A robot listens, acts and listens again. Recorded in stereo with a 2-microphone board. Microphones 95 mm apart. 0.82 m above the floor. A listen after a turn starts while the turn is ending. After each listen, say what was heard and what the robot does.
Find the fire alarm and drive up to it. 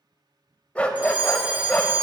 The fire alarm: about 15° right or 165° right. Turn 15° right.
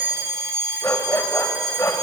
So it is at 150° right. Turn 150° right.
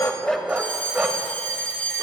The fire alarm is now 15° left. Turn 15° left.
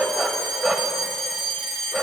Drive 1.0 m forward.
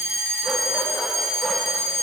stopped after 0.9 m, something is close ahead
I am next to the fire alarm.